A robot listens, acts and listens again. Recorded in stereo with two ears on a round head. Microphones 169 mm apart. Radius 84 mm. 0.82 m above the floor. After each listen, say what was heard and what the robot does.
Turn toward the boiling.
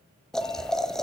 Turn 30° left.
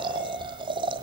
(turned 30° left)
So it is at 25° right. Turn 25° right.
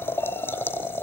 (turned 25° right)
The boiling is now 10° left. Turn 10° left.
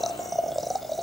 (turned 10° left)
Found it: boiling, straight ahead, 1 to 2 m away.